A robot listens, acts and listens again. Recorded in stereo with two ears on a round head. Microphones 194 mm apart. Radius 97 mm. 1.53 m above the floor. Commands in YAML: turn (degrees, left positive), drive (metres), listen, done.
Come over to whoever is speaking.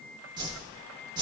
listen: true
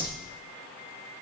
listen: true
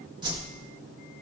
done: "I can't make out anyone speaking, only a whoosh."